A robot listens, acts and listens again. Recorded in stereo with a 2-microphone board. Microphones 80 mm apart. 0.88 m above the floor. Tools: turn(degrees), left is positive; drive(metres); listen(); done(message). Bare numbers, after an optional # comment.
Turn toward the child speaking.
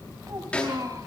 # The child speaking: about 45° right or 135° right.
turn(-45)
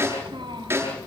# So it is at 100° right.
turn(-100)
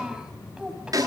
# The child speaking is now 10° right.
turn(-10)
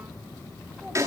listen()
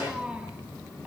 # The child speaking is now 15° right.
turn(-15)
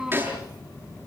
# The child speaking is now 10° right.
turn(-10)
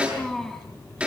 done("Facing the child speaking, over 4 m away.")